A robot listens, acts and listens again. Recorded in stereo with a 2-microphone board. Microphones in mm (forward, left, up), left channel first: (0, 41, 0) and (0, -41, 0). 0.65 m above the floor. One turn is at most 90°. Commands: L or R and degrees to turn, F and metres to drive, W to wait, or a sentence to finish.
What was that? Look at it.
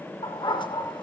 L90
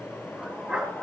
R10
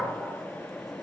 Facing the dog barking.